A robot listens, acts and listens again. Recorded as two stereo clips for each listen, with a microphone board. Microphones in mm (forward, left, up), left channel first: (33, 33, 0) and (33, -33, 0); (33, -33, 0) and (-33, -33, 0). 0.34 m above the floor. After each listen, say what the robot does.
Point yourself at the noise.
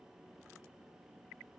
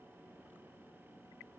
Keep listening.
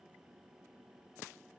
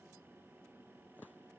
Keep listening.
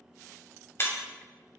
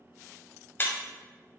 Turn 50° left.
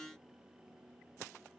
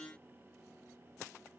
I heard breaking glass from this way, but can't make it out now.